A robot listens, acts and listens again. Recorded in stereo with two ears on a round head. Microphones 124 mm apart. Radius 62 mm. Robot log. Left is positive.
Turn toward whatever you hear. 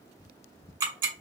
note: The ticking: about 35° right or 145° right.
cmd yaw -35
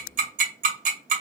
note: So it is at 110° right.
cmd yaw -110
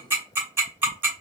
note: The ticking is now 15° right.
cmd yaw -15
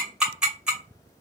end: Found it: ticking, straight ahead.